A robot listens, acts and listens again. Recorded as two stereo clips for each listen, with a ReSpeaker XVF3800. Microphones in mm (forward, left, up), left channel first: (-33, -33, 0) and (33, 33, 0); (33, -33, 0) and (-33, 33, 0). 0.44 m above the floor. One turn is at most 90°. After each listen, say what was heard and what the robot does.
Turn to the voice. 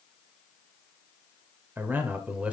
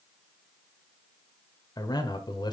The man speaking: 25° right. Turn 25° right.
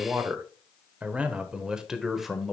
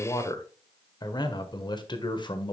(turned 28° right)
The man speaking is now 45° right. Turn 45° right.
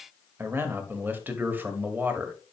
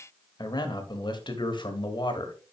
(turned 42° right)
The man speaking is now 20° right. Turn 20° right.
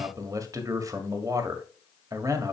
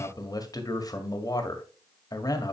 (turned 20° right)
Facing the man speaking.